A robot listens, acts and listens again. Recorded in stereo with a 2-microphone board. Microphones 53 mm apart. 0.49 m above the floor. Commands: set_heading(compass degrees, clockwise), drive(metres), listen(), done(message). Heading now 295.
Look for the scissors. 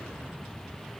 listen()
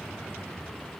listen()
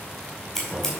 set_heading(265)
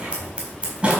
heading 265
set_heading(295)
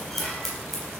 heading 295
done("Facing the scissors.")